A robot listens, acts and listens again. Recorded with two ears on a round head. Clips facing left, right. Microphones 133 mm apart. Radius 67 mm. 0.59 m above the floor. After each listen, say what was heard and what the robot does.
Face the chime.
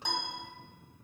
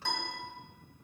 Keep listening.
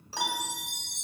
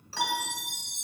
The chime: about 75° left or 105° left. Turn 75° left.
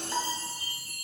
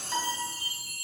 Found it: a chime, straight ahead.